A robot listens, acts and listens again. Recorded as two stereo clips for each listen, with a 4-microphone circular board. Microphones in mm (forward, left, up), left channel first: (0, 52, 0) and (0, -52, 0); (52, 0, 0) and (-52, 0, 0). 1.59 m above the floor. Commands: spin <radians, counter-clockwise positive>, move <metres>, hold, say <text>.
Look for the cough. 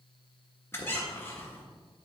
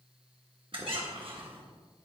hold
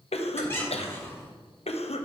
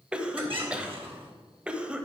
spin 1.75
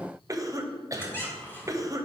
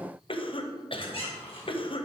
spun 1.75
spin -0.61
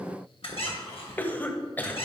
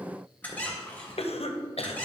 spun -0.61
spin 0.26
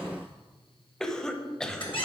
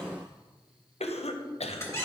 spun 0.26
say Found it: a cough, straight ahead, under 1 m away.